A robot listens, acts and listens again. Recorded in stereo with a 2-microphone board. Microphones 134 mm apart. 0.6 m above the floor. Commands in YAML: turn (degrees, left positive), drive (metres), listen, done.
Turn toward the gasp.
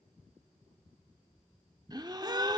turn: -30
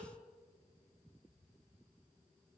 listen: true
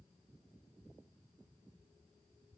done: "I heard a gasp, but can't make it out now. It was about straight ahead or 120° right."